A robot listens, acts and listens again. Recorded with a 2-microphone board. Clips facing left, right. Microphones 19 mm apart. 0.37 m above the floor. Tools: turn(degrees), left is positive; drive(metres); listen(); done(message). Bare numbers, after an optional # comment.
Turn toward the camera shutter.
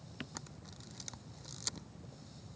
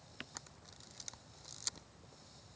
turn(30)
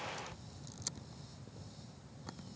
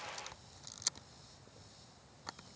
# So it is at 30° right.
turn(-30)
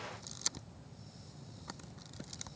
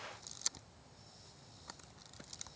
done("Found it: a camera shutter, straight ahead.")